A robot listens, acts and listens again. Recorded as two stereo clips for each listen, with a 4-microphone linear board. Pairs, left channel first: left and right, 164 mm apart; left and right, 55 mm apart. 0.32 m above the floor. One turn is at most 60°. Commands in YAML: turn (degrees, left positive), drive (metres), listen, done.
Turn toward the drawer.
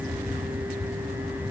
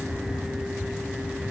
listen: true
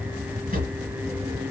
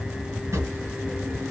turn: -60
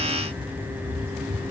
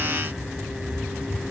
listen: true
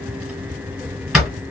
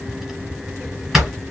done: "Found it: a drawer, straight ahead, 1 to 2 m away."